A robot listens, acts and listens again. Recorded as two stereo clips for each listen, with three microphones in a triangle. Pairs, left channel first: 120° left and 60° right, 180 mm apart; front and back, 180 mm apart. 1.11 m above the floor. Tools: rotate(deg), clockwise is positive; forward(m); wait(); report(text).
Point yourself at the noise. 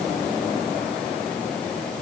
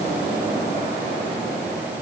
wait()
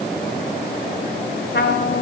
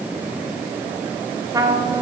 rotate(-110)
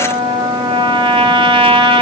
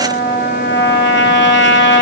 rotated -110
report("Facing the trumpet.")